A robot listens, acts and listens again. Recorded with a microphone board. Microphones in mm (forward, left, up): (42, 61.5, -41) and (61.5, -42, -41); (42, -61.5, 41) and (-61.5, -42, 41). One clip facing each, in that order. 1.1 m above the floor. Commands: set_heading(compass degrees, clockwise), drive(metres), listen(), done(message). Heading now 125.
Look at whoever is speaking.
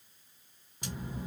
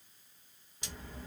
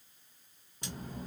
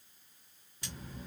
set_heading(100)
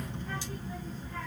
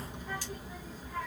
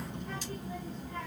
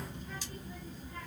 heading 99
done("Facing the child speaking.")